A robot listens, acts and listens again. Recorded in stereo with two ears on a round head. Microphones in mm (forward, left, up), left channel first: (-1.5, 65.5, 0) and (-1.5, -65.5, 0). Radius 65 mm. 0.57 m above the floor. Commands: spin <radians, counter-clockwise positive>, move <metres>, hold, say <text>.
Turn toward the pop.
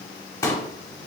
spin 0.35
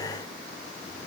hold
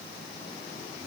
say I heard a pop, but can't make it out now. It was about straight ahead or 140° left.